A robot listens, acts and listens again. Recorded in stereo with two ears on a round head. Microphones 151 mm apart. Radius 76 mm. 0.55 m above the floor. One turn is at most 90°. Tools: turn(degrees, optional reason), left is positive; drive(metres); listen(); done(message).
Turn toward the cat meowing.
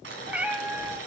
turn(degrees=-30)
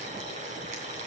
listen()
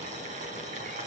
listen()
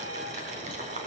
done("I heard a cat meowing, but can't make it out now. It was about 20° left or 140° right.")